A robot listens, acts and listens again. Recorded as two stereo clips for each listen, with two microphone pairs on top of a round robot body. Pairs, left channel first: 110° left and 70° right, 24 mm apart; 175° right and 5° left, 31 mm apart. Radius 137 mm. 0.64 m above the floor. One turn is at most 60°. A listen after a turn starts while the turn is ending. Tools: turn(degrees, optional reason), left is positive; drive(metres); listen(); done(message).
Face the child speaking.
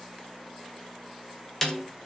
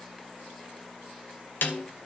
listen()
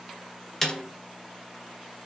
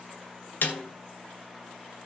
listen()
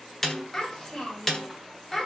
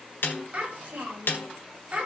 turn(degrees=45, reason="The child speaking: 45° left.")
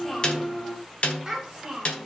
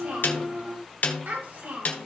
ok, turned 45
done("Facing the child speaking, over 4 m away.")